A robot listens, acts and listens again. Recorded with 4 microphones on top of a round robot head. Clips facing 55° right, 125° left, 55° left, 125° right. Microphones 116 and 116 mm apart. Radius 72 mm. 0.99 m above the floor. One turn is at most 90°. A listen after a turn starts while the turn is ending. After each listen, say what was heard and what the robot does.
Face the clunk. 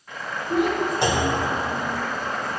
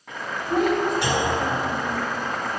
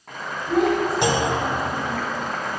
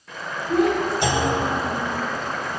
The clunk: 10° left. Turn 10° left.
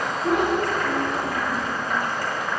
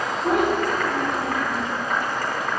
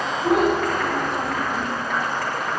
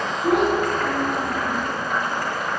Facing where the clunk came from. I can't hear it now.